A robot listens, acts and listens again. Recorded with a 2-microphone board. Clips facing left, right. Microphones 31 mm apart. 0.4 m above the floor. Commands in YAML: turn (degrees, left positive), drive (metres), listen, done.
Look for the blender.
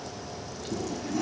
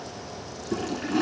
listen: true
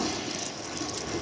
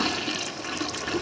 listen: true
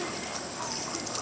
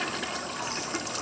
done: "I can't make out a blender, only a toilet flushing."